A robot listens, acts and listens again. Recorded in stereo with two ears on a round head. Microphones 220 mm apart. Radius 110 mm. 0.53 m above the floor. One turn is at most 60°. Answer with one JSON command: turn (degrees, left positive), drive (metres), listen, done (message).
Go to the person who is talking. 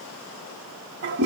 {"listen": true}
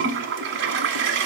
{"listen": true}
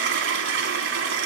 {"done": "I can't make out anyone speaking, only a toilet flushing."}